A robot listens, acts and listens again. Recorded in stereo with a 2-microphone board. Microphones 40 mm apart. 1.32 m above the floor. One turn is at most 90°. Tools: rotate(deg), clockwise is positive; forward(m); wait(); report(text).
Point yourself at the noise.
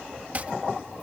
rotate(40)
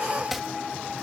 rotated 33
report("Facing the chopping.")